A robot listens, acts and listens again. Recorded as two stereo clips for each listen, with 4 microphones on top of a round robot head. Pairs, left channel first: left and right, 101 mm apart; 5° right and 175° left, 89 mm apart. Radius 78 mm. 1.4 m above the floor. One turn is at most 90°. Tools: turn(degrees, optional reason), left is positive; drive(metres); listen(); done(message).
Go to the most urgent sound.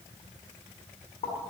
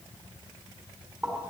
listen()
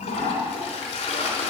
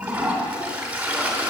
listen()
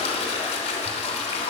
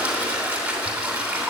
done("I can't make out anything urgent, only a toilet flushing.")